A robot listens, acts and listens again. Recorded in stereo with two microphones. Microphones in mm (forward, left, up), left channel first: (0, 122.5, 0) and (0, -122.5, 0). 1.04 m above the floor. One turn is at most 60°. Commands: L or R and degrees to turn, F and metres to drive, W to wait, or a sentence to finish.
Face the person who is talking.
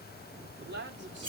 R45
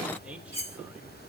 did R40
Facing the man speaking.